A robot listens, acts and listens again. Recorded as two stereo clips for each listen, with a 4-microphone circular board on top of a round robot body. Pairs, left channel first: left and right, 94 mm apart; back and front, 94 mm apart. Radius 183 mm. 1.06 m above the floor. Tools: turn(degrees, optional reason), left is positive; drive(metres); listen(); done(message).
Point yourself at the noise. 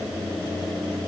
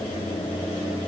listen()
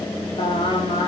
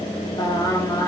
turn(degrees=115, reason="The singing: 115° left.")
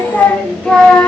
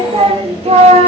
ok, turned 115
done("Facing the singing, 2 to 4 m away.")